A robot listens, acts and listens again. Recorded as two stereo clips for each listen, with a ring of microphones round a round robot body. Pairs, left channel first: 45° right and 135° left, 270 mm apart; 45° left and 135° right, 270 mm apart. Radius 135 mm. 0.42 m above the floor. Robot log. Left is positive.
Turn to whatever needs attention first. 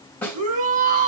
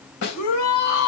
note: The shout: 75° left.
cmd yaw +75
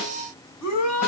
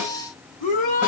note: The shout is now 20° right.
cmd yaw -20
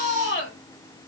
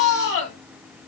end: Found it: a shout, straight ahead, over 4 m away.